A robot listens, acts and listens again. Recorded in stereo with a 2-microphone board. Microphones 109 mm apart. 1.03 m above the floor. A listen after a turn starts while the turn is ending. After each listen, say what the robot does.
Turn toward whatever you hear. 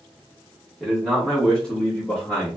Turn 30° left.
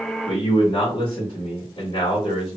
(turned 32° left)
Turn 110° left.
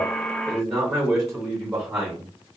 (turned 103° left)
Turn 10° right.
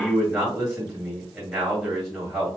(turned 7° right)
Found it: a man speaking, straight ahead.